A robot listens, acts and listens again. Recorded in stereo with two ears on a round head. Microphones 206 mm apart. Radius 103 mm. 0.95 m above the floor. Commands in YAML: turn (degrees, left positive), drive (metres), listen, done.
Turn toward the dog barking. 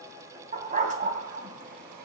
turn: -35
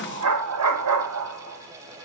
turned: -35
turn: -105
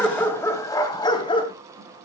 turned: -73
turn: 20
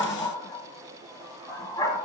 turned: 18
turn: 15
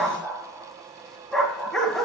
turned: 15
done: "Found it: a dog barking, straight ahead."